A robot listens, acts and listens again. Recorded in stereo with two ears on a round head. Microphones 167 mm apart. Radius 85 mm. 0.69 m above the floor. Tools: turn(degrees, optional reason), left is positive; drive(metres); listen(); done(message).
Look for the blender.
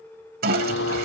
turn(degrees=70, reason="The blender: about 70° left or 110° left.")
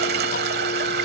listen()
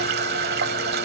listen()
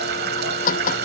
turn(degrees=45, reason="So it is at 45° left.")
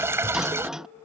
done("Found it: a blender, straight ahead.")